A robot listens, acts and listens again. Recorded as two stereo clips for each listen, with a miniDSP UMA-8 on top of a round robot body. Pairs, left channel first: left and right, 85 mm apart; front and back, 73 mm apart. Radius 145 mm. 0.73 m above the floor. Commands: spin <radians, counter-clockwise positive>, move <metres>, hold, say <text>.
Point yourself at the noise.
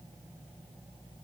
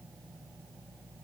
hold
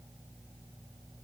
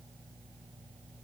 hold
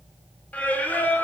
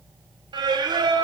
spin 2.79
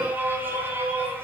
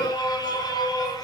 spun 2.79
spin -0.44
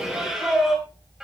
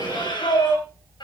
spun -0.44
say Found it: singing, straight ahead.